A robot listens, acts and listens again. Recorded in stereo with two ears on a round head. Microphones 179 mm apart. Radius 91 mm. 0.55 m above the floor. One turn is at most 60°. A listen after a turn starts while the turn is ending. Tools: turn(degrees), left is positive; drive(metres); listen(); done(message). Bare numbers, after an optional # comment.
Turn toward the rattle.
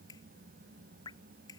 listen()
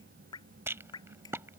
turn(-30)
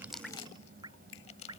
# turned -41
listen()
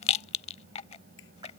# So it is at 30° left.
turn(30)
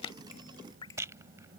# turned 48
# The rattle is now 15° right.
turn(-15)
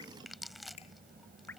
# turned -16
listen()
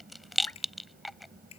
done("Found it: a rattle, straight ahead.")